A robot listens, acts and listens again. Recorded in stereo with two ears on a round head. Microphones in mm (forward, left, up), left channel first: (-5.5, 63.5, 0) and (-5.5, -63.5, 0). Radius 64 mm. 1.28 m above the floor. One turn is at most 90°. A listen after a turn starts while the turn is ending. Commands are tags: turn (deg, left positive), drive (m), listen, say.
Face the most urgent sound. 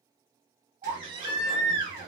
<turn deg="-35"/>
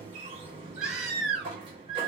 <say>Facing the baby crying.</say>